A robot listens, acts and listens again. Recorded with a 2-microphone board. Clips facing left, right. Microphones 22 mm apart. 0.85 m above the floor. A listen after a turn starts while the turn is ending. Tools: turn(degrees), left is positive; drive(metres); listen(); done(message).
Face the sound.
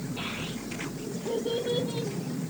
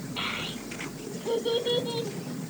turn(degrees=-55)
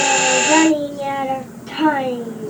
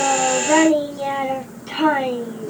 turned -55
done("Found it: a child speaking, straight ahead, 2 to 4 m away.")